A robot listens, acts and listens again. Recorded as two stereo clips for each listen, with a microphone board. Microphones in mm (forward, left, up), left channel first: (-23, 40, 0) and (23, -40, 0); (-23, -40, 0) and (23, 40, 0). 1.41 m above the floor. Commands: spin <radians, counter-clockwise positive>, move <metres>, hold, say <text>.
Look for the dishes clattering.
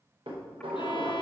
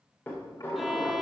spin -0.96
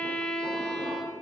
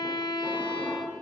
hold
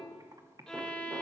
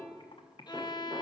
hold
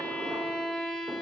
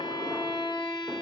say Facing where the dishes clattering came from. I can't hear it now.